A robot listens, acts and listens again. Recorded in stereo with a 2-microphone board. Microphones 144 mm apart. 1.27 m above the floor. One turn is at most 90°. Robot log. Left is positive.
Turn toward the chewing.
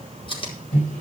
note: The chewing: about 35° left or 145° left.
cmd yaw +35
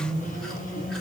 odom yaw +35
cmd idle
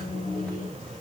cmd idle
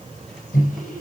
end: I heard chewing, but can't make it out now. It was about straight ahead or 110° left.